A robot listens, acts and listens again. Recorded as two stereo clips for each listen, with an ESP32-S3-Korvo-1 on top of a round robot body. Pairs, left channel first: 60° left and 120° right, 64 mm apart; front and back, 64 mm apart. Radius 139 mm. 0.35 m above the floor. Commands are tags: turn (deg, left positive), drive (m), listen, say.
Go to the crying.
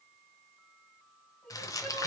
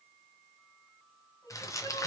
<turn deg="-15"/>
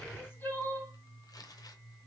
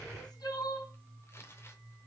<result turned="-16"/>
<drive m="1.0"/>
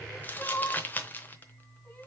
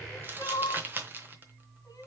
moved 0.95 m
<drive m="1.0"/>
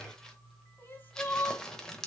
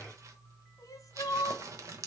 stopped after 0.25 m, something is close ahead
<say>Arrived at the crying, straight ahead.</say>